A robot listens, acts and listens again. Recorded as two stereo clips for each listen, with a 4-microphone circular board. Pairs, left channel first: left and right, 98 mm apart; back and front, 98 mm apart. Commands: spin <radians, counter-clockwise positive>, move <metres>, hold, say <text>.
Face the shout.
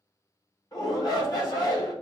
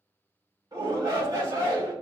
spin 0.79
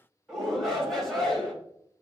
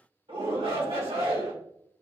say Found it: a shout, straight ahead.